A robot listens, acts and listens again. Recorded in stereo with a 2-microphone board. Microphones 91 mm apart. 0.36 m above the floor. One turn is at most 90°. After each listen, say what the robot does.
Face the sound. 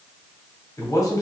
Turn 40° left.
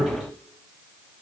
Turn 90° left.
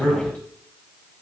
Turn 15° left.
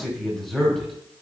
Facing the man speaking.